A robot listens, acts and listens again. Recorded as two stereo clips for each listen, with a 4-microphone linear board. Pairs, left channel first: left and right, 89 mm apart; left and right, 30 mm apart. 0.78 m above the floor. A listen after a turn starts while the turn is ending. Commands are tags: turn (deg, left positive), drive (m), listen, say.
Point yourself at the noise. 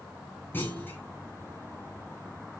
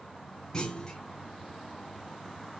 <turn deg="25"/>
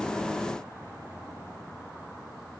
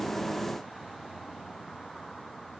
<listen/>
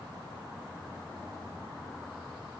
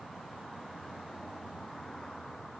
<say>I heard a clunk, but can't make it out now. It was about straight ahead or 130° left.</say>